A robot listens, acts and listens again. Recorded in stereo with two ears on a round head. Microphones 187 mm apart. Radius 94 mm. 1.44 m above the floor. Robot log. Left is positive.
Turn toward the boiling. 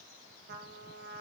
cmd idle
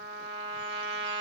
cmd idle
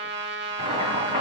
note: The boiling: about 30° right or 150° right.
cmd yaw -30
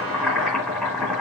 end: Found it: boiling, straight ahead, 2 to 4 m away.